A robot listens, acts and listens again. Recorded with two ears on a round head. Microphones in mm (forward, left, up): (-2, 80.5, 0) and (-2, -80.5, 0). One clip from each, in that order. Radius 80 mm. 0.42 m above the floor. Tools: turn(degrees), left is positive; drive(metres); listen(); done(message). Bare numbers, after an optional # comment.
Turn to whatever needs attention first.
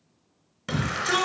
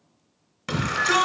turn(-30)
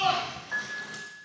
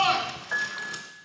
# So it is at 140° right.
turn(-140)
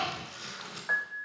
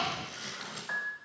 listen()
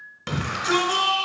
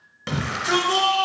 # The shout is now 10° left.
turn(10)
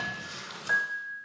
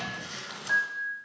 listen()
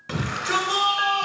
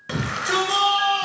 done("Found it: a shout, straight ahead, 2 to 4 m away.")